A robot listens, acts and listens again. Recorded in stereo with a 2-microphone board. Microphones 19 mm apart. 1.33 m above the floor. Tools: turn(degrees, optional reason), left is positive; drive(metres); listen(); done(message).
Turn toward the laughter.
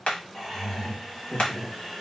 turn(degrees=40, reason="The laughter: about 40° left or 140° left.")
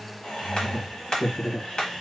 turn(degrees=115, reason="So it is at 115° left.")
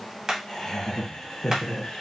turn(degrees=55, reason="The laughter is now 55° left.")
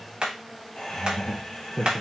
turn(degrees=25, reason="The laughter is now 25° left.")
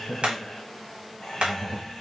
turn(degrees=10, reason="The laughter is now 10° left.")
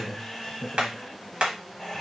done("Found it: laughter, straight ahead.")